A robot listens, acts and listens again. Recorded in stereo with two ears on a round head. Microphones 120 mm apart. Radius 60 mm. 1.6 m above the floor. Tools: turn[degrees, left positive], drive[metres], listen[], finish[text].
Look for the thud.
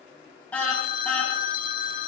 Action: listen[]
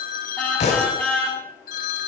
Thought: The thud: about 55° left or 125° left.
Action: turn[55]
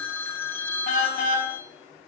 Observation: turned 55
Action: listen[]
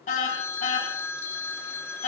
Action: finish[I heard a thud, but can't make it out now. It was about straight ahead or 70° left.]